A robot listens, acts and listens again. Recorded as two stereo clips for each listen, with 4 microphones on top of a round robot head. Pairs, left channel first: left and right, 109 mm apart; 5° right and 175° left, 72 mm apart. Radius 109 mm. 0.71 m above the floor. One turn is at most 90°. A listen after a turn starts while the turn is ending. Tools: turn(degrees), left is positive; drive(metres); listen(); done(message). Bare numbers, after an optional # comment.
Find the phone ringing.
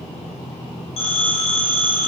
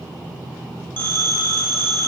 # The phone ringing: 60° left.
turn(60)
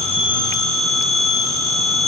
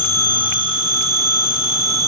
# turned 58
done("Facing the phone ringing, 1 to 2 m away.")